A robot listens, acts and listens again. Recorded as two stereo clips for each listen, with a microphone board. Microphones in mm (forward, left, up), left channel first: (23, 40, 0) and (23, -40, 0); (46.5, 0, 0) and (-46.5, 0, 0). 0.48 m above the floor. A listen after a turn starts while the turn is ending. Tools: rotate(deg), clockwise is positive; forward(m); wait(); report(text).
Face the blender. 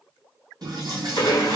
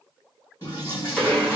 rotate(-75)
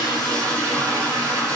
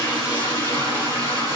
wait()
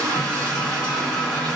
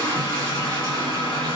report("Facing the blender, 1 to 2 m away.")